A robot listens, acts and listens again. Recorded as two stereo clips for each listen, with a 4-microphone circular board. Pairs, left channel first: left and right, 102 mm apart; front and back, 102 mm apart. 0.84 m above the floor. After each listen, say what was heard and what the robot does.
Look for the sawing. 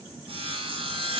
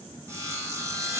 The sawing: 115° right. Turn 115° right.
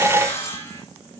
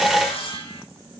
The sawing is now 25° left. Turn 25° left.
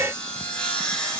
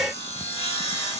The sawing is now 10° left. Turn 10° left.
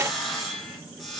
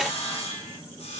Facing the sawing.